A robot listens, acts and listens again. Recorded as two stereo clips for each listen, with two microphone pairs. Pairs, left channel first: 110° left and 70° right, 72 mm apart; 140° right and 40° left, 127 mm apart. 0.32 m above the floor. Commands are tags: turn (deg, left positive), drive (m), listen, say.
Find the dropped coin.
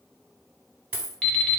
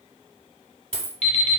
<say>Found it: a dropped coin, straight ahead.</say>